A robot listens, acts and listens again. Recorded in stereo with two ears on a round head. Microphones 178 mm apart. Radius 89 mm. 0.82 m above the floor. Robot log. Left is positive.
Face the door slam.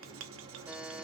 cmd idle
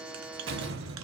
note: The door slam: about 65° right or 115° right.
cmd yaw -65
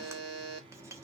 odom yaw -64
cmd idle
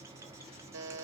end: I heard a door slam, but can't make it out now. It was about straight ahead or 50° right.